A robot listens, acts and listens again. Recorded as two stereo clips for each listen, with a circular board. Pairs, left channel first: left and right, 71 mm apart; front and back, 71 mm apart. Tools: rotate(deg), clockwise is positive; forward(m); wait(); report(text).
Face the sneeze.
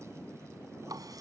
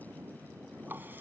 wait()
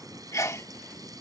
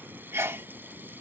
rotate(-130)
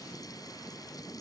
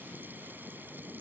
report("Facing where the sneeze came from. I can't hear it now.")